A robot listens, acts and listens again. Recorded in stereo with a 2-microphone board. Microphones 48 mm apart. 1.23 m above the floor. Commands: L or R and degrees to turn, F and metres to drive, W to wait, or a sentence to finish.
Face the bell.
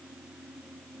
W
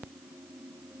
W
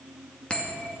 L20
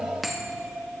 Facing the bell, 2 to 4 m away.